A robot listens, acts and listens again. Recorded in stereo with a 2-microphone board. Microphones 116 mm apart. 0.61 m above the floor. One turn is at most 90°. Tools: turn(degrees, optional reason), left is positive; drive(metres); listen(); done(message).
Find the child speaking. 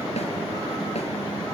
listen()
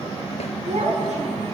turn(degrees=-65, reason="The child speaking: about 65° right or 115° right.")
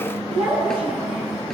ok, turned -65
turn(degrees=-50, reason="So it is at 50° right.")
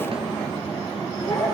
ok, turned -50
done("Found it: a child speaking, straight ahead, over 4 m away.")